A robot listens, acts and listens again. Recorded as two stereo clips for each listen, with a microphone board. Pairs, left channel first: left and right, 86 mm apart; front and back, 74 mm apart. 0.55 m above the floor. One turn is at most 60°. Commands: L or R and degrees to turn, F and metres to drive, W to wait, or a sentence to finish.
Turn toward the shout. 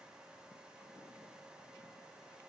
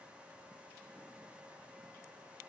W
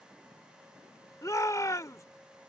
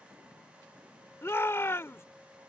L50
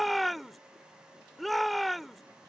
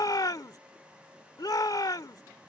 Found it: a shout, straight ahead.